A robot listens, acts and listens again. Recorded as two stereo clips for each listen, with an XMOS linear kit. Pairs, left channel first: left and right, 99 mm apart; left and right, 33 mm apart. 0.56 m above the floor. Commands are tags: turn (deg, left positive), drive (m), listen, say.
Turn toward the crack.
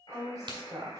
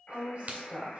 <turn deg="-60"/>
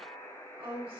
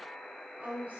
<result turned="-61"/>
<listen/>
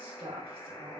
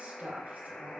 <say>I heard a crack, but can't make it out now. It was about 5° left or 60° right.</say>